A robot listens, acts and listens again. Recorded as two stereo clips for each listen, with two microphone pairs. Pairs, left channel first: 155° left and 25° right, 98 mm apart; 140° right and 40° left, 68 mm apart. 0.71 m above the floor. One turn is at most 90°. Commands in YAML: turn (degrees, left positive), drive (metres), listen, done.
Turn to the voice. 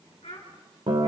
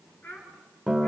turn: 90
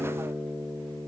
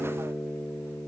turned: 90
turn: 60
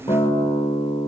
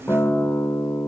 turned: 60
listen: true
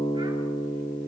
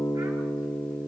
done: "I heard a child speaking from this way, but can't make it out now."